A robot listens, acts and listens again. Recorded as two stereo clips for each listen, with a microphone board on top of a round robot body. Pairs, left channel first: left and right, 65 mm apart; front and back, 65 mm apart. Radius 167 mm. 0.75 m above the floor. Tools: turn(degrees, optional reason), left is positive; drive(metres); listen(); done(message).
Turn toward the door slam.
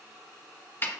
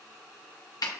listen()
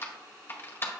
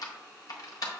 listen()
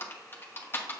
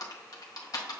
done("I can't make out a door slam to turn to.")